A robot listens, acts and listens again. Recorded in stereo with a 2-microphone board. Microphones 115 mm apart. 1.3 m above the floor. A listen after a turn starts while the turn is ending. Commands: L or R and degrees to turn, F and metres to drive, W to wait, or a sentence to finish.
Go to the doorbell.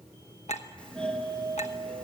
L30
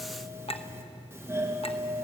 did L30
R20
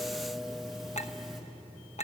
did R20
F1.0
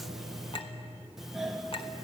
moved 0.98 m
F1.0
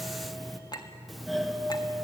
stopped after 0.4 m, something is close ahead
I am next to the doorbell.